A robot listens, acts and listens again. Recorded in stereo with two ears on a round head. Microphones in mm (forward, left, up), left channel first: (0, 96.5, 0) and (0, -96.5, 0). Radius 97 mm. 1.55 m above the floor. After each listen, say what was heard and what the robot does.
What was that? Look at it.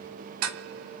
Turn 90° right.
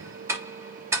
So it is at 10° right. Turn 10° right.
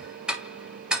Found it: ticking, straight ahead.